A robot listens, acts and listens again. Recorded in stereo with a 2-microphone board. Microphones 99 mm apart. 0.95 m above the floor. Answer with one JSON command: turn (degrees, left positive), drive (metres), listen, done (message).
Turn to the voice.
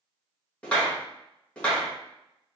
{"listen": true}
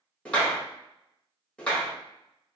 {"listen": true}
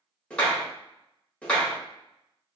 {"done": "I can't make out anyone speaking, only a clap."}